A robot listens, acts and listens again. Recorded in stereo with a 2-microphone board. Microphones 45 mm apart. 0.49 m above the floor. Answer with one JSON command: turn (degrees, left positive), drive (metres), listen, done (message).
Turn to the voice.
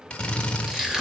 {"listen": true}
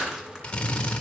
{"listen": true}
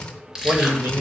{"turn": -60}
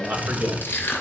{"turn": -50}
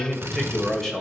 {"turn": 10}
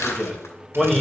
{"done": "Found it: a man speaking, straight ahead, 2 to 4 m away."}